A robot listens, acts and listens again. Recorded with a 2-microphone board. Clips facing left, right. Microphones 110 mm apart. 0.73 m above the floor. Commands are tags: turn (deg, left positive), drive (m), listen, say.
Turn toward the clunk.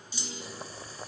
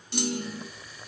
<turn deg="-70"/>
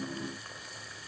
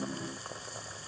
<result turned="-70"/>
<listen/>
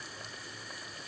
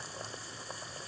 <say>I heard a clunk, but can't make it out now. It was about straight ahead or 40° right.</say>